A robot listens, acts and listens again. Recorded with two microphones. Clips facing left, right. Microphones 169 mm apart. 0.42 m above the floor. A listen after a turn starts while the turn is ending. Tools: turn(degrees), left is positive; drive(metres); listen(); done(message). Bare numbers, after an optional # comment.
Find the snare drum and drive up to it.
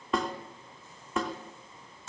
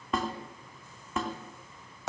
turn(30)
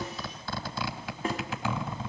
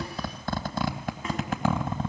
# So it is at 145° left.
turn(145)
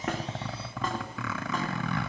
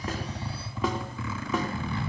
listen()
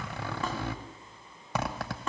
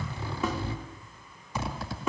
drive(1.0)
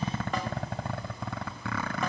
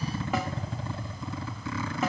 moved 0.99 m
drive(1.0)
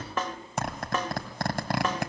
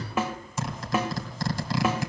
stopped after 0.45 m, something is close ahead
# The snare drum is now 10° right.
turn(-10)
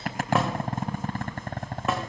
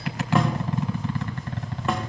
listen()
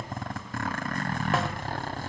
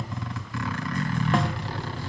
listen()
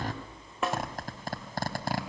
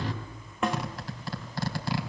done("I am next to the snare drum.")